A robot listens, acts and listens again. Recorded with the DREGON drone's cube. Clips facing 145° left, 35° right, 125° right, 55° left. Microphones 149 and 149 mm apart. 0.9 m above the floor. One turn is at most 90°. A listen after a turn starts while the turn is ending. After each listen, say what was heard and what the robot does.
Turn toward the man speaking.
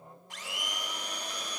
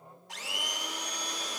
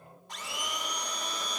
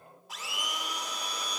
Keep listening.
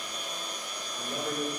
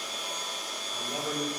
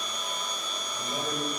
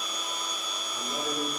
The man speaking: 25° left. Turn 25° left.
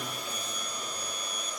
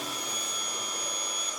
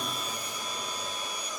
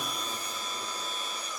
Keep listening.
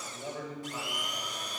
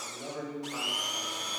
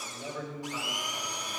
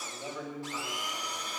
The man speaking is now 20° right. Turn 20° right.
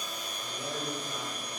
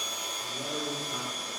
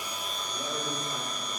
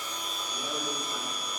The man speaking is now 15° right. Turn 15° right.
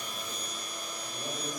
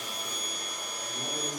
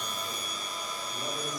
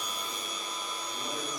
Keep listening.
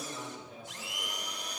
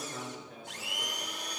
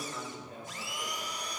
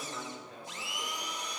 Found it: a man speaking, straight ahead, 2 to 4 m away.